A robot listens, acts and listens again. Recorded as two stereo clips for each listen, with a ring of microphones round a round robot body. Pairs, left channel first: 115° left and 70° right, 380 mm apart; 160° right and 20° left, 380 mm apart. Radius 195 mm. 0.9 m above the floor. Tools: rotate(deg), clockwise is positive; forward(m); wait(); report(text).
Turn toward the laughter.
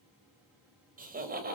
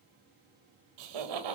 report("Found it: laughter, straight ahead.")